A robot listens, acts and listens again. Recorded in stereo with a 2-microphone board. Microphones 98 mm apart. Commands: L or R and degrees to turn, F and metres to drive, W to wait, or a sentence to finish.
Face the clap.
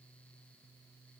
W
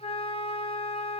W
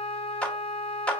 L30
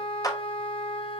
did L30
L135
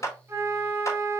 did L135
L40
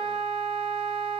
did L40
W
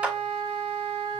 R15
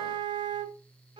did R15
W
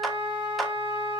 W
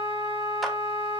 Facing where the clap came from. I can't hear it now.